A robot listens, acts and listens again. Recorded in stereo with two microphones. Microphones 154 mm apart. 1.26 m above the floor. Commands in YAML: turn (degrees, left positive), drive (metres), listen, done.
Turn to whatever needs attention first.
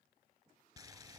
listen: true
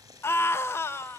turn: 15
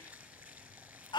turn: 150
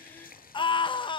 turn: 30
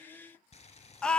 done: "Found it: a scream, straight ahead, 1 to 2 m away."